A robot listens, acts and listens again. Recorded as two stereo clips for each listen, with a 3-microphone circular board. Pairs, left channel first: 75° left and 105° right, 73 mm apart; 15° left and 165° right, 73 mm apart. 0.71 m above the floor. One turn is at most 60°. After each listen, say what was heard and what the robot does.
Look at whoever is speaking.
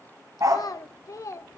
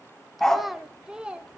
The child speaking: 120° left. Turn 60° left.
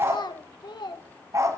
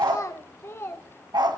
The child speaking is now 70° left. Turn 60° left.
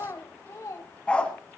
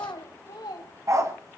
The child speaking is now 30° left. Turn 30° left.
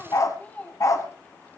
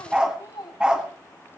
Found it: a child speaking, straight ahead.